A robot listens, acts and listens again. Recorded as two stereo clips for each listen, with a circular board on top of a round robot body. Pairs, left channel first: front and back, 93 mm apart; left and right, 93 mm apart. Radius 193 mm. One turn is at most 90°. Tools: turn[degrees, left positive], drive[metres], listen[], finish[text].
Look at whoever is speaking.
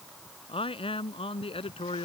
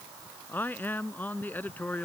Thought: The man speaking: 20° left.
Action: turn[20]
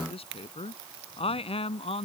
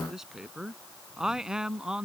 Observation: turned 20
Action: finish[Found it: a man speaking, straight ahead.]